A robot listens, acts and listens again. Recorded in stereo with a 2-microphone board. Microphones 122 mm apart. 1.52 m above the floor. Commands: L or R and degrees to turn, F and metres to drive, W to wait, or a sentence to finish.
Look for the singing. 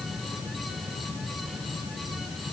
W
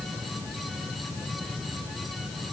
W
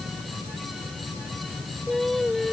L30
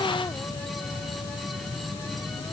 W
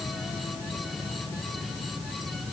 W
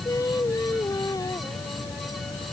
L150
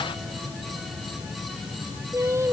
R25
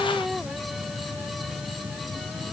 W
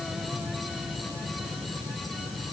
W
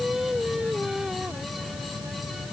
Facing the singing.